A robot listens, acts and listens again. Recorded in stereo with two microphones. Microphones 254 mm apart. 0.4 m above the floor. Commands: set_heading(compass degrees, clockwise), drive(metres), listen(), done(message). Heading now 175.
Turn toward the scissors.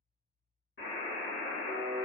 listen()
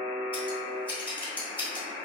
set_heading(145)
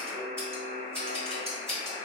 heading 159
set_heading(169)
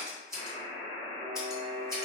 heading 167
done("Found it: scissors, straight ahead, 1 to 2 m away.")